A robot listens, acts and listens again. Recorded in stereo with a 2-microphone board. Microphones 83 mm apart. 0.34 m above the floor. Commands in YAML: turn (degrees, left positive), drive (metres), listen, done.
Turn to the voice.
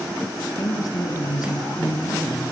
turn: 50
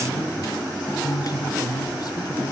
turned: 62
turn: 60
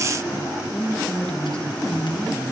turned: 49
turn: 15
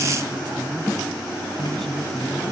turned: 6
done: "Facing the woman speaking."